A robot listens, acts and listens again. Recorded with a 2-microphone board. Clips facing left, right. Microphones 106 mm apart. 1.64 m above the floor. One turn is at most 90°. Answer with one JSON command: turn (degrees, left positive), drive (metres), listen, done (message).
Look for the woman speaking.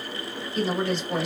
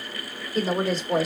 {"turn": -40}
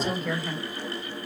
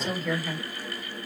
{"done": "Found it: a woman speaking, straight ahead."}